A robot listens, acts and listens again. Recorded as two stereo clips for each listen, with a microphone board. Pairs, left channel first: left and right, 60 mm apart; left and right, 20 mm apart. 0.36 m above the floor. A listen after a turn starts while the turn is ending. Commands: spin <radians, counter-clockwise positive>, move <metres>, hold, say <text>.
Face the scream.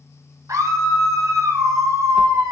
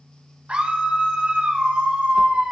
spin -1.05
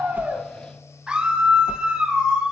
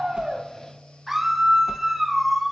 spin -0.26
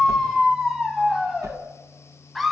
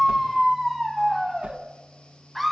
say Facing the scream, 2 to 4 m away.